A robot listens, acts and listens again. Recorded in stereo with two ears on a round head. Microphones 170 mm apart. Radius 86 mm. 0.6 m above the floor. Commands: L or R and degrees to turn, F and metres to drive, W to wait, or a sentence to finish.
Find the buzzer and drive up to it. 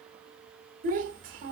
W
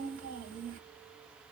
W
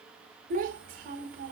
I can't make out a buzzer, only a child speaking.